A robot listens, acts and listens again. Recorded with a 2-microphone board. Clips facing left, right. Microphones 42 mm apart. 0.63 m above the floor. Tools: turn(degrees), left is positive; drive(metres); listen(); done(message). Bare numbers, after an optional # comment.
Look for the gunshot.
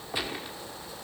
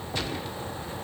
# The gunshot: about 15° left or 165° left.
turn(15)
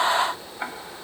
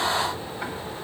listen()
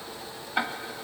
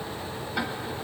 done("I heard a gunshot, but can't make it out now. It was about straight ahead or 150° left.")